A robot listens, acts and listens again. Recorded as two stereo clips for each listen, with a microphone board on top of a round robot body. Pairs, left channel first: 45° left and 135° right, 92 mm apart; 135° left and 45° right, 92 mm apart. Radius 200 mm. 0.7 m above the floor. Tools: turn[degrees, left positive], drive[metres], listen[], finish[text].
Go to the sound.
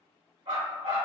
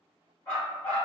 Thought: The dog barking: 150° right.
Action: turn[-150]
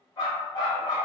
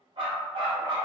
Action: drive[1.0]
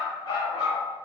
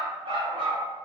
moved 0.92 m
Action: drive[1.0]
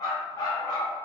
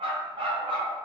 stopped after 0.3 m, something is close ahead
Thought: The dog barking is now 10° right.
Action: turn[-10]
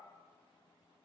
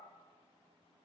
Action: listen[]
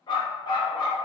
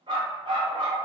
Action: finish[Arrived at the dog barking, straight ahead.]